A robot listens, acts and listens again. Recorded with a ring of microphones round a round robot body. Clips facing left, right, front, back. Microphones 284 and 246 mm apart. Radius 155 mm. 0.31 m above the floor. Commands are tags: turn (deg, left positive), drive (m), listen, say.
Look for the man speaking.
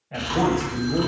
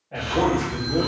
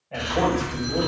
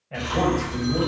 <turn deg="120"/>
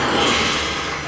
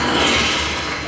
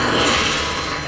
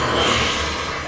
<listen/>
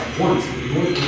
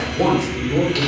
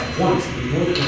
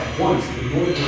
<turn deg="40"/>
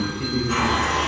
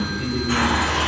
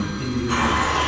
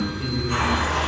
<listen/>
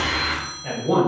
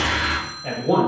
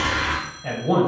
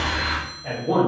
<turn deg="15"/>
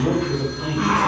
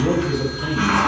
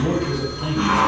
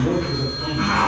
<say>Facing the man speaking, 1 to 2 m away.</say>